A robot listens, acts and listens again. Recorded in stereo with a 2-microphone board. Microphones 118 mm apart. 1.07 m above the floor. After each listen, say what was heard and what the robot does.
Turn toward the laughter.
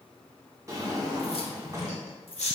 The laughter: about 75° left or 105° left. Turn 75° left.
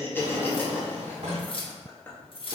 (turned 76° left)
So it is at 20° left. Turn 20° left.
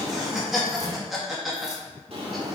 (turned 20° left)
Found it: laughter, straight ahead.